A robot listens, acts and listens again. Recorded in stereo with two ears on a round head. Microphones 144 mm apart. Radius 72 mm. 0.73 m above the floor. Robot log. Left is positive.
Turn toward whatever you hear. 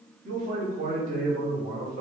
note: The man speaking: about 60° right or 120° right.
cmd yaw -60
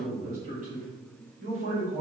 note: So it is at 50° right.
cmd yaw -50
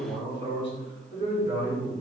note: The man speaking is now 15° right.
cmd yaw -15
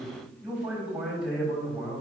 end: Found it: a man speaking, straight ahead.